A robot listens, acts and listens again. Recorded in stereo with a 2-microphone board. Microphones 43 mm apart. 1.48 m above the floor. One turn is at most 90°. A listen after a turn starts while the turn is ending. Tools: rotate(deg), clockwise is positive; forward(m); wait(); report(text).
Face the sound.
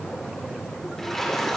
rotate(-30)
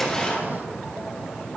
wait()
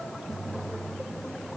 report("I heard a splash, but can't make it out now. It was about 25° right or 145° left.")